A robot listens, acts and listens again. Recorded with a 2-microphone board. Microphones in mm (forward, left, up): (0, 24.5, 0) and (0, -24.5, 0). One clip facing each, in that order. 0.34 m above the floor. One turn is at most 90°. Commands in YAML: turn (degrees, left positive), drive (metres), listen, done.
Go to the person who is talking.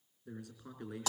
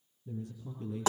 turn: 75
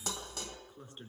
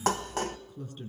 turn: 25
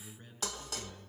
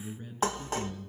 drive: 1.0
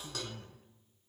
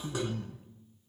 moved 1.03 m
drive: 1.0
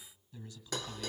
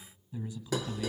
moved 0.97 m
turn: -20
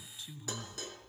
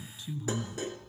drive: 1.0
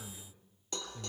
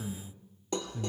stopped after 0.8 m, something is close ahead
done: "Arrived at the man speaking, straight ahead."